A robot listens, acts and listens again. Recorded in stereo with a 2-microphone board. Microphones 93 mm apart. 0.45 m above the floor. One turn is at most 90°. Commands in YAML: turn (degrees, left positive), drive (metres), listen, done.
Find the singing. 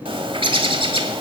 listen: true
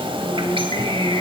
turn: 50
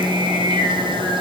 turn: 80
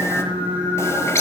turn: -15
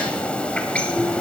listen: true
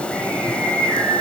done: "Facing the singing."